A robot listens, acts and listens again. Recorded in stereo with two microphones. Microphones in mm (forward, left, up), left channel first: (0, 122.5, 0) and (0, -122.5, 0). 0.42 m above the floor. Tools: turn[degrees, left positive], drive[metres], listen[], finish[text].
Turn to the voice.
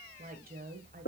Thought: The woman speaking: about 35° right or 145° right.
Action: turn[-35]
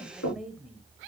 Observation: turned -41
Action: finish[Found it: a woman speaking, straight ahead.]